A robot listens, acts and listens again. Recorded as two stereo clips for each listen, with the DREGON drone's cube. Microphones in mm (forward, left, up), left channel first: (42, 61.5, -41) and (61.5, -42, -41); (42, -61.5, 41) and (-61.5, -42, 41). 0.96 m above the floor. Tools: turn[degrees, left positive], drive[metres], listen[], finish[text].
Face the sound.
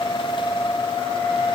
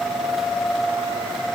Action: listen[]
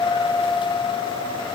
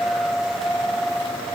Action: listen[]
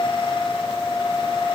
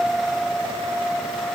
Action: finish[I can't make out anything to turn to.]